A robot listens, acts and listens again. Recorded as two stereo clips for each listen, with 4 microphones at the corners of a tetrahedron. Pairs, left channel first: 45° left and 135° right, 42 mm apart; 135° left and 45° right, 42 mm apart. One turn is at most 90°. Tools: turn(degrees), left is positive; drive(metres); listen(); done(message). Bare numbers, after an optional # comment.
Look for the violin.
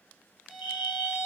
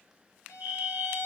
# The violin: 145° left.
turn(90)
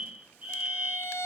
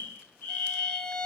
# The violin is now 60° left.
turn(60)
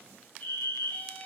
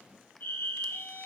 # The violin is now 20° right.
turn(-20)
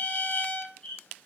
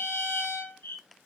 done("Facing the violin, 1 to 2 m away.")